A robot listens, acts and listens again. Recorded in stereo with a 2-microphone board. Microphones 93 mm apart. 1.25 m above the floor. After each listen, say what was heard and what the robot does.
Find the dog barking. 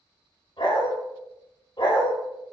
The dog barking: about 60° left or 120° left. Turn 60° left.
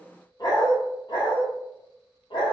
So it is at 65° left. Turn 65° left.
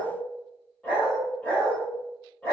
The dog barking is now 15° left. Turn 15° left.
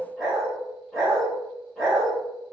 Facing the dog barking.